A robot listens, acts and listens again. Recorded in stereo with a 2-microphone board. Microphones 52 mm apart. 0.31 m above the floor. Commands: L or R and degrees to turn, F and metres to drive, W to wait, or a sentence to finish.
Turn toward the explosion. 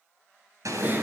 R90
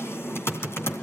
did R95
Facing where the explosion came from. I can't hear it now.